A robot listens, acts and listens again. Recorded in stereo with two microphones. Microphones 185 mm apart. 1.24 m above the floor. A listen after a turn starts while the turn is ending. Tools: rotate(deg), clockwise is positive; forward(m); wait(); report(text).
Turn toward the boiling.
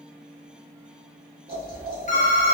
rotate(55)
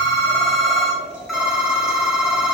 report("Facing the boiling, 1 to 2 m away.")